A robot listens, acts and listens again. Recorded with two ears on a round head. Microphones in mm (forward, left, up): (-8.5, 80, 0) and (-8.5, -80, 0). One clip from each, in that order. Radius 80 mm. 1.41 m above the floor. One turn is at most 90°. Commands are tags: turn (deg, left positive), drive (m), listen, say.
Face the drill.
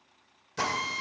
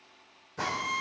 <turn deg="90"/>
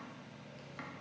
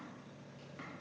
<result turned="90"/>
<listen/>
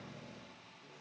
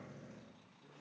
<listen/>
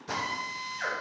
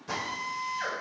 <say>Found it: a drill, straight ahead.</say>